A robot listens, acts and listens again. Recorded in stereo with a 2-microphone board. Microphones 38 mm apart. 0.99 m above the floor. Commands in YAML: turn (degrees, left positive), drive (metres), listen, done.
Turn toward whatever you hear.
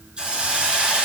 turn: -25
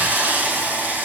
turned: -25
turn: -130
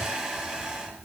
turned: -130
turn: -25
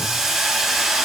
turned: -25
turn: -10
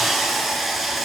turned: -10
done: "Found it: a hiss, straight ahead, over 4 m away."